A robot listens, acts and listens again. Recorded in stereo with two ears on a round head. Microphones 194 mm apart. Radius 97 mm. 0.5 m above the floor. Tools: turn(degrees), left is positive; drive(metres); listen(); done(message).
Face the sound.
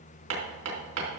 turn(degrees=-60)
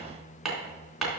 done("Found it: hammering, straight ahead, 2 to 4 m away.")